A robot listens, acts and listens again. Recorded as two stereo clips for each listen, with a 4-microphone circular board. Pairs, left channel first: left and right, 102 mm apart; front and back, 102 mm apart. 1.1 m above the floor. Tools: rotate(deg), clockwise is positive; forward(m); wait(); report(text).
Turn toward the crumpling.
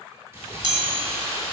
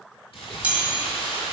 rotate(25)
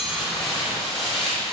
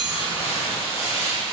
report("Facing the crumpling, 2 to 4 m away.")